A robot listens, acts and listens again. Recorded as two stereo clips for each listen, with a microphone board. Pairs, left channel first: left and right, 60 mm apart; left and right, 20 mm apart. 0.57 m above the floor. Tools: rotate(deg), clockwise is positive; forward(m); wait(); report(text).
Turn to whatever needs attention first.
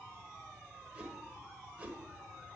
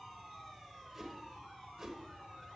wait()
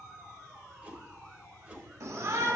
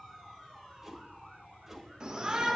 rotate(60)
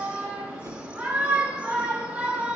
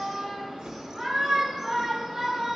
rotate(25)
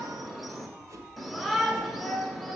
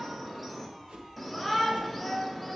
report("Found it: a shout, straight ahead.")